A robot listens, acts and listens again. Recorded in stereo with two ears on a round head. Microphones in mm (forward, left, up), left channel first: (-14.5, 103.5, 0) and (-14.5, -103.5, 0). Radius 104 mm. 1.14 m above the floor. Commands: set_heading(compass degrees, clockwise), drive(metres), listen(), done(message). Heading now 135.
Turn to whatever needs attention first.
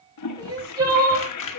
set_heading(155)
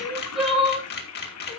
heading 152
done("Facing the crying, over 4 m away.")